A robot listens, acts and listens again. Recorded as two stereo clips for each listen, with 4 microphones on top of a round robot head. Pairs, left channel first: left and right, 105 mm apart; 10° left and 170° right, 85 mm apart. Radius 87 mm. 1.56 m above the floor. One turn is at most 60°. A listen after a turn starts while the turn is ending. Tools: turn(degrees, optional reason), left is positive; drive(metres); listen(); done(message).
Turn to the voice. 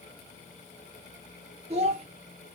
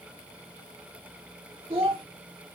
turn(degrees=-60, reason="The child speaking: 130° right.")
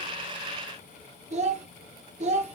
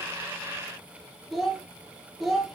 turn(degrees=-60, reason="The child speaking is now 80° right.")
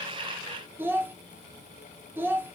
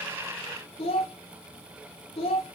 turn(degrees=-20, reason="The child speaking is now 20° right.")
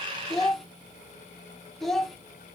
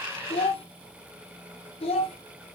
done("Found it: a child speaking, straight ahead, under 1 m away.")